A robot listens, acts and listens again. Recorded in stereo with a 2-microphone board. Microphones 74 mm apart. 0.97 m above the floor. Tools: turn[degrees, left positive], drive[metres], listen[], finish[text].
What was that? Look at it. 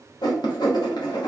Action: turn[90]
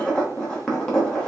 Thought: So it is at 10° left.
Action: turn[10]
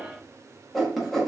Action: finish[Facing the writing.]